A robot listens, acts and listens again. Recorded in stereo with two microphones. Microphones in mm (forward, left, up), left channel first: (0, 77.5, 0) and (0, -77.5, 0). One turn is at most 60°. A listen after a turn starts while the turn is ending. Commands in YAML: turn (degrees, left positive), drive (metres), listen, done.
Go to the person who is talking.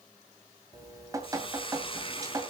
listen: true
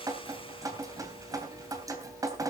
listen: true
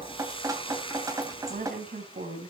turn: -60
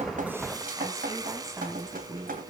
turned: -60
turn: -20
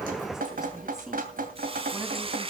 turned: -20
listen: true
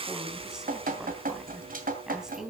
drive: 1.0
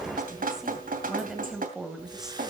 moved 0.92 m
drive: 1.0
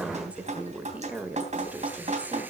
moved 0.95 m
turn: -10
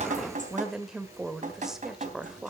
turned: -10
drive: 1.0
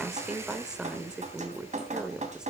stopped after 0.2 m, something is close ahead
done: "Arrived at the woman speaking, straight ahead."